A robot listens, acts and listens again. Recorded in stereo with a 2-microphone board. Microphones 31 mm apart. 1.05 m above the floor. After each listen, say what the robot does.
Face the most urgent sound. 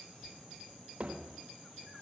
Keep listening.
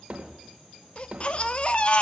Turn 40° left.
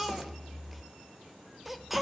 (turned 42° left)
Found it: a baby crying, straight ahead, 1 to 2 m away.